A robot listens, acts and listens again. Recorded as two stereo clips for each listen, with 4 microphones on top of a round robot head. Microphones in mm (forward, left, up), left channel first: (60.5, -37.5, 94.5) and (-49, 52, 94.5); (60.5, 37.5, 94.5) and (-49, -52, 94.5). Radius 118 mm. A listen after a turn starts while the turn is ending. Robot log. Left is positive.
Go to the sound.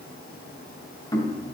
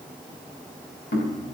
note: The knocking: 25° left.
cmd yaw +25
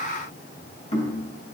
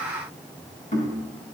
cmd fwd 1.0
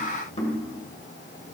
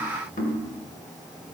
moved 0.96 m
note: The knocking is now 10° left.
cmd yaw +10
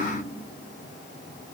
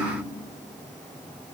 cmd idle
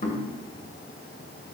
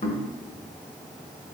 cmd fwd 1.0
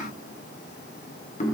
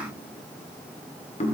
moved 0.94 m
cmd fwd 1.0
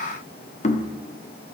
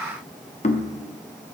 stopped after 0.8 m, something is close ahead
end: I am next to the knocking.